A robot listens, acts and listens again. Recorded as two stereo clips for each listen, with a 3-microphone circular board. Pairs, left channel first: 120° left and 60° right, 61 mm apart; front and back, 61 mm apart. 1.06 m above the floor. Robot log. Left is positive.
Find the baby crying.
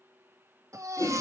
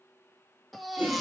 note: The baby crying: 90° right.
cmd yaw -90
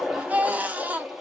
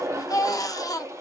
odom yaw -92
end: Found it: a baby crying, straight ahead.